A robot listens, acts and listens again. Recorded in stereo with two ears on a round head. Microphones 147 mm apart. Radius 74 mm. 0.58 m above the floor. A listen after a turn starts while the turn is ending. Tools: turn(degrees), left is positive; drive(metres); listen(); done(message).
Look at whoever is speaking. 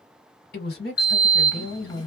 turn(degrees=65)
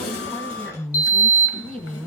turn(degrees=10)
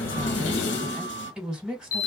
done("Found it: a woman speaking, straight ahead, 1 to 2 m away.")